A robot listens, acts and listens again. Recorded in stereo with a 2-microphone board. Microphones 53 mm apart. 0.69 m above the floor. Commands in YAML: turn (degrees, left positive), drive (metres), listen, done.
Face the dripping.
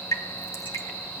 turn: 90
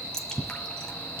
turn: 10
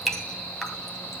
done: "Facing the dripping."